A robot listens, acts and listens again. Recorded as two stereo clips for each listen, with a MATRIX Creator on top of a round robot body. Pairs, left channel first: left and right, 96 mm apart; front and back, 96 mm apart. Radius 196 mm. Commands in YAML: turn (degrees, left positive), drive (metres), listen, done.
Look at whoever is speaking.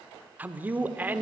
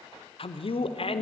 turn: -20
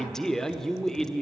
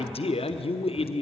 done: "Facing the man speaking."